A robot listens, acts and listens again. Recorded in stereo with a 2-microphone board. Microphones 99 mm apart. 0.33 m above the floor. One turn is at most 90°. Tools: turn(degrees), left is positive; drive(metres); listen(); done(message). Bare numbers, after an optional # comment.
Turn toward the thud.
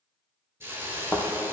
# The thud: about 20° left or 160° left.
turn(20)
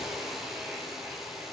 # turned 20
listen()
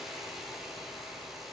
done("I heard a thud, but can't make it out now. It was about straight ahead or 140° left.")